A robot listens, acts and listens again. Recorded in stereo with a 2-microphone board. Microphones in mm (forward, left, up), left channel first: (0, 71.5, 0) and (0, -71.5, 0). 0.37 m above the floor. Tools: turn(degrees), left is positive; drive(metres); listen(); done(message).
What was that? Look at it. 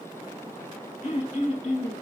turn(degrees=50)
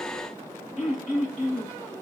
done("Facing the throat clearing, 1 to 2 m away.")